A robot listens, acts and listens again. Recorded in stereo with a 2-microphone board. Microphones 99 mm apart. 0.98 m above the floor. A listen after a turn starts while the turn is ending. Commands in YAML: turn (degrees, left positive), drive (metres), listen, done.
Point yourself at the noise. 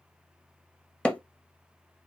turn: 30
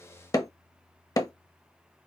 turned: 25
turn: 140
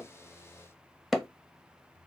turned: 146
done: "Found it: hammering, straight ahead, under 1 m away."